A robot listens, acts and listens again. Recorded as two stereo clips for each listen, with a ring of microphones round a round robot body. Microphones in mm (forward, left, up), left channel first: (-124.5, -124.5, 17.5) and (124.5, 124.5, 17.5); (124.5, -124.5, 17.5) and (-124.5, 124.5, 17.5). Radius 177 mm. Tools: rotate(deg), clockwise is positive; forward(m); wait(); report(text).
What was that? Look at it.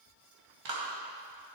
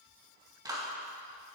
rotate(-55)
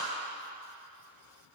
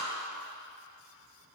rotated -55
rotate(-10)
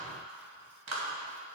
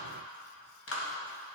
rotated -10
report("Found it: a clap, straight ahead.")